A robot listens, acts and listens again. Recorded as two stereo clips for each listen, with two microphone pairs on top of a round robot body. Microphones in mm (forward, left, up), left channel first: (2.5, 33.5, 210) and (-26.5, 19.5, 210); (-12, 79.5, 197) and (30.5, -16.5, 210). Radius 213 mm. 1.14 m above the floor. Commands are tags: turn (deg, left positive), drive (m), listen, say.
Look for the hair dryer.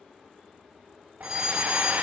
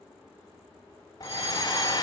<turn deg="165"/>
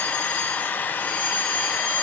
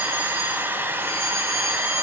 <say>Facing the hair dryer, under 1 m away.</say>